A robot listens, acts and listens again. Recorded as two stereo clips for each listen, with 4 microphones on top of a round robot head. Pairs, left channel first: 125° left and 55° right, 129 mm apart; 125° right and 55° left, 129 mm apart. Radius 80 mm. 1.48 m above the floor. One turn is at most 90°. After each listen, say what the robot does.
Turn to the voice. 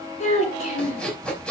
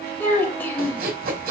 Turn 90° left.
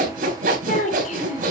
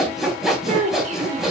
Turn 90° left.
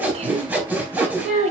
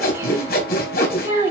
Turn 15° right.
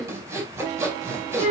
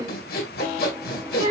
Turn 10° right.
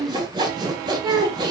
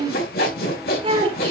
Facing the child speaking, over 4 m away.